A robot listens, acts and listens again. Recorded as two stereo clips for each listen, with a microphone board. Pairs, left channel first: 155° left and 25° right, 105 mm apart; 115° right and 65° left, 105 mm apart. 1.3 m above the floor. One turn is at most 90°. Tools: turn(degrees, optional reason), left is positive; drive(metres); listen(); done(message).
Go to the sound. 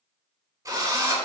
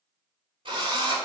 turn(degrees=35, reason="The drill: 35° left.")
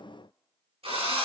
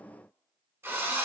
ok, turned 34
drive(metres=1.0)
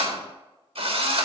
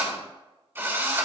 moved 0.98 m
drive(metres=1.0)
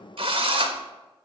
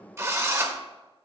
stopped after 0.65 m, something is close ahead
done("Arrived at the drill, straight ahead.")